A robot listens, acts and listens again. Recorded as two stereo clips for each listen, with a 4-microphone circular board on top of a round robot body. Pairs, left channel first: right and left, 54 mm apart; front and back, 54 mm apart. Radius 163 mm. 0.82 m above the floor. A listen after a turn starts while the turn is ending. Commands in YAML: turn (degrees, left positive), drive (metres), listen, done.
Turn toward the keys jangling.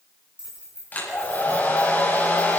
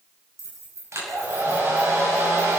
turn: 160
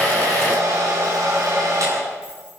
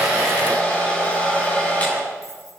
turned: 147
turn: 15
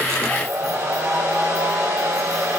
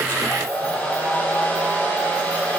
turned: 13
listen: true
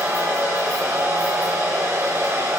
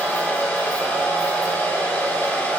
done: "Facing where the keys jangling came from. I can't hear it now."